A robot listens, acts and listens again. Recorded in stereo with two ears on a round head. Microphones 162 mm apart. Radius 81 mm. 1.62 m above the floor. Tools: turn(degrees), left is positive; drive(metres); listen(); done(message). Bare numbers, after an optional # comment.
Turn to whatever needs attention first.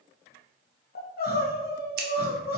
# The crying: about 60° left or 120° left.
turn(60)
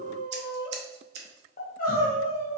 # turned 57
# So it is at 55° left.
turn(55)
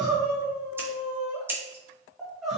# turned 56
done("Found it: crying, straight ahead, 1 to 2 m away.")